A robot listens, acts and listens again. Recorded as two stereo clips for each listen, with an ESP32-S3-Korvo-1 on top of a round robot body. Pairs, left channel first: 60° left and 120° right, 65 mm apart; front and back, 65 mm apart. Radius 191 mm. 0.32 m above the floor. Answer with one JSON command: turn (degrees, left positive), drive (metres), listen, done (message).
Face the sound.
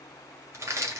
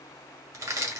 {"turn": -160}
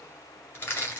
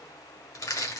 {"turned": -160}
{"done": "Found it: crushing, straight ahead, 1 to 2 m away."}